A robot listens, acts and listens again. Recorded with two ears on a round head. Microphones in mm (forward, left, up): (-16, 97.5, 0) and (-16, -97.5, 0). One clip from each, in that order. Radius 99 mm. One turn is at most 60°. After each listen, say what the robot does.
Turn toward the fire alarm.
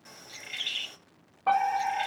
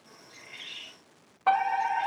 Turn 50° right.
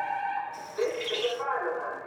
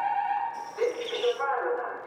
Turn 15° right.
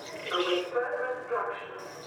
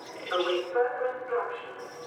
Facing the fire alarm, 2 to 4 m away.